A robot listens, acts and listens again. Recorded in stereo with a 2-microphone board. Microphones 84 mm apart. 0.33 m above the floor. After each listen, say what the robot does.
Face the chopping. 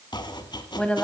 Turn 60° left.
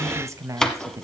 Facing the chopping, 1 to 2 m away.